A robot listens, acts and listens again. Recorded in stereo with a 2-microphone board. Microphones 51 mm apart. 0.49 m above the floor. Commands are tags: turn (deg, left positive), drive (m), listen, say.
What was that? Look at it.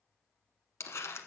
<turn deg="60"/>
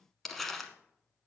<say>Facing the crumpling.</say>